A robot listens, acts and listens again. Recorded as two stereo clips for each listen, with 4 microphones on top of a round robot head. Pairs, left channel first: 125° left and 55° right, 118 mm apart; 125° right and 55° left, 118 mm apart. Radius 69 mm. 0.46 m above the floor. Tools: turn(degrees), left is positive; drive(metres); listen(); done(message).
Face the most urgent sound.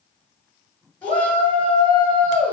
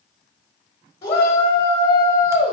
turn(degrees=-160)
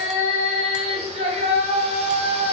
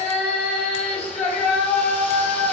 turn(degrees=-60)
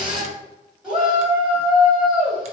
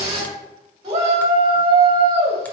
turn(degrees=25)
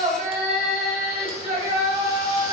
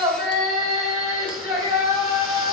done("Facing the shout.")